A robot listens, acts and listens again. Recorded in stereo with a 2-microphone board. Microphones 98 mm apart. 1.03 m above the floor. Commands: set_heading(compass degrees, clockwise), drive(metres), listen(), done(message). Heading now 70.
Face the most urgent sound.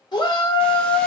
set_heading(25)
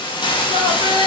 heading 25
set_heading(305)
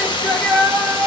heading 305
set_heading(295)
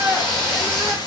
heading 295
done("Found it: a shout, straight ahead.")